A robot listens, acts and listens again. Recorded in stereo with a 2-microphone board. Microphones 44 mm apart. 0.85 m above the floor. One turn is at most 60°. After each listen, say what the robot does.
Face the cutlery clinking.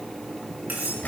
Turn 45° right.
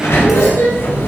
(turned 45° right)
Keep listening.
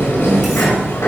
Keep listening.
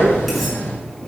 I heard cutlery clinking, but can't make it out now. It was about straight ahead or 90° right.